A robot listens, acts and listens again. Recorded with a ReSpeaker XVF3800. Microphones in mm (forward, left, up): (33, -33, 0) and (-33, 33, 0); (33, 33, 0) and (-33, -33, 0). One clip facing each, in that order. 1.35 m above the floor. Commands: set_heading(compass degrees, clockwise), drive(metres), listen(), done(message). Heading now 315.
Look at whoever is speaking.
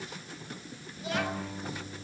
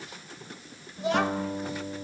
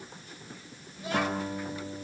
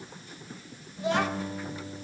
set_heading(155)
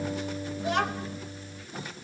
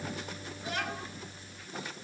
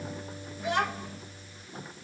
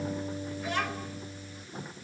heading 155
set_heading(180)
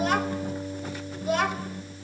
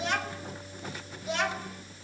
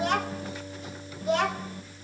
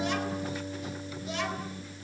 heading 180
done("Found it: a child speaking, straight ahead, over 4 m away.")